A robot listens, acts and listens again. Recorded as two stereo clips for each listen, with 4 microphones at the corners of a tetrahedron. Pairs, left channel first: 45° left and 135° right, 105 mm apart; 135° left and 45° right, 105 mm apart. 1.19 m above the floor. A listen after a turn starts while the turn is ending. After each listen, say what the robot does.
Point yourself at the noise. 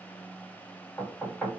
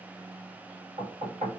Turn 40° right.
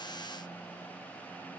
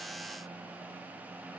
Keep listening.
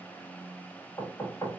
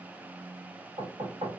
Turn 20° right.
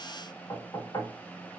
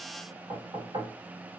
Turn 10° right.
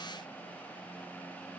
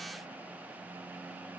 Keep listening.
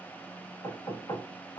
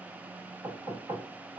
Facing the knocking.